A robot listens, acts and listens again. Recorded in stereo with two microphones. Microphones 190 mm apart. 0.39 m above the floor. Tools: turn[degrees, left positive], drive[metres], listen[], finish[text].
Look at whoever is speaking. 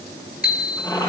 Action: listen[]
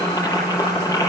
Action: listen[]
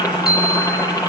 Action: finish[I can't make out anyone speaking to turn to.]